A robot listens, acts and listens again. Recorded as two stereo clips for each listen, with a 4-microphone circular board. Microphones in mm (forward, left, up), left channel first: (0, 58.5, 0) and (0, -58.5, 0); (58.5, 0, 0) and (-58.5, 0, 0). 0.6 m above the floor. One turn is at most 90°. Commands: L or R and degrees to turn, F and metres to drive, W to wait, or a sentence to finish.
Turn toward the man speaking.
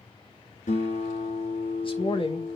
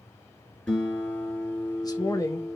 L60
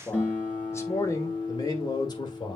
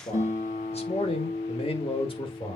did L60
L40
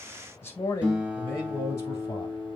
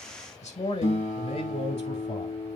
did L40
L25
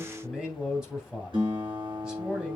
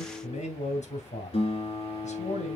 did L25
Found it: a man speaking, straight ahead, 2 to 4 m away.